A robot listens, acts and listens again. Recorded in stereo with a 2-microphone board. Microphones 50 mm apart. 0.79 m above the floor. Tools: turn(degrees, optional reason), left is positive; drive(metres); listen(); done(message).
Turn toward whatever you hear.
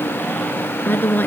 turn(degrees=40, reason="The woman speaking: about 40° left or 140° left.")
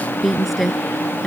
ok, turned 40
done("Facing the woman speaking.")